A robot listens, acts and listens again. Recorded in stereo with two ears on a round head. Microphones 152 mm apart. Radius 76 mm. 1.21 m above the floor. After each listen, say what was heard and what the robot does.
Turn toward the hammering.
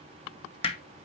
The hammering: about 35° left or 145° left. Turn 35° left.
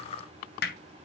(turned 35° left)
So it is at 110° left. Turn 110° left.
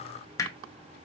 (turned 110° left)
The hammering is now 20° left. Turn 20° left.
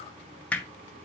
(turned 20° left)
The hammering is now 10° left. Turn 10° left.
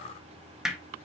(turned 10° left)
Facing the hammering.